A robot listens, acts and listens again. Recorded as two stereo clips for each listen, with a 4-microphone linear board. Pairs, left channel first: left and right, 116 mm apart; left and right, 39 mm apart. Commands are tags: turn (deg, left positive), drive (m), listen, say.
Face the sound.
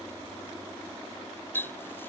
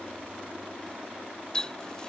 <turn deg="20"/>
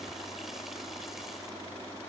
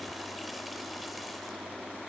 <listen/>
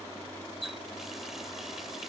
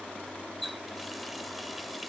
<say>Found it: a running tap, straight ahead.</say>